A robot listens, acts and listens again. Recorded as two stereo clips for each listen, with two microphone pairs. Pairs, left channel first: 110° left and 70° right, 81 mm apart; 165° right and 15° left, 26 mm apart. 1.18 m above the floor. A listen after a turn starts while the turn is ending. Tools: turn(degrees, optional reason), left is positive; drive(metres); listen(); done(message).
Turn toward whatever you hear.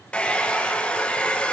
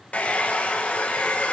turn(degrees=-175, reason="The hair dryer: 175° right.")
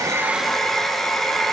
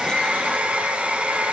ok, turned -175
turn(degrees=30, reason="The hair dryer is now 30° left.")
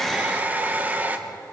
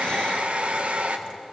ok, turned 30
done("Found it: a hair dryer, straight ahead, 1 to 2 m away.")